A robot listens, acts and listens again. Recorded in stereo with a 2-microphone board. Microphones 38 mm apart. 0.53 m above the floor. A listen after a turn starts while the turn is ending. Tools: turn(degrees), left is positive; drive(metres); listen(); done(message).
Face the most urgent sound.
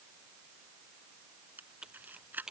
listen()
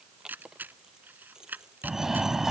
turn(degrees=-30)
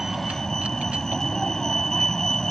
turn(degrees=15)
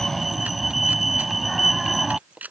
done("Found it: a fire alarm, straight ahead.")